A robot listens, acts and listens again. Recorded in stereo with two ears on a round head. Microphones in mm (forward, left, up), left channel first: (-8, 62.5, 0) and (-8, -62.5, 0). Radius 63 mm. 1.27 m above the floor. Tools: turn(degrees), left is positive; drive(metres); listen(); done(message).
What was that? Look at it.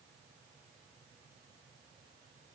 listen()
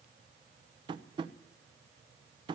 turn(degrees=-35)
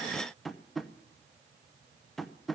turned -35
done("Found it: tapping, straight ahead.")